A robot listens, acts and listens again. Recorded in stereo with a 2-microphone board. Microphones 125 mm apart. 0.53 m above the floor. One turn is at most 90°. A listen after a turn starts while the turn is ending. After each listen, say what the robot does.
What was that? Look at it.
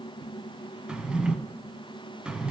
Turn 30° right.
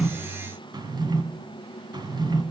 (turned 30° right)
Turn 90° right.
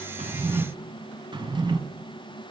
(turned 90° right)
Turn 40° right.
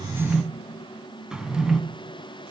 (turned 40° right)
Facing the drawer, 1 to 2 m away.